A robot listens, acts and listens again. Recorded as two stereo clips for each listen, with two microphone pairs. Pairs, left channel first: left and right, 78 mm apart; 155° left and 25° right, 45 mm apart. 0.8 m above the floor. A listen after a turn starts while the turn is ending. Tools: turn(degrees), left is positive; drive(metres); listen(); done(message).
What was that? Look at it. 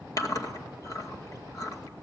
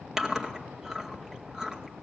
turn(degrees=55)
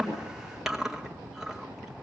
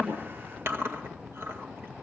done("Facing the chewing, 2 to 4 m away.")